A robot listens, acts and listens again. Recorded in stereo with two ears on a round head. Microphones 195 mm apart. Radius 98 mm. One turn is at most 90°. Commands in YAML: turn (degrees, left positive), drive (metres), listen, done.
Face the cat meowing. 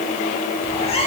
turn: 30
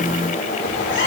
turn: 90
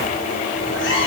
turn: 60
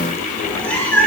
done: "Facing the cat meowing, 2 to 4 m away."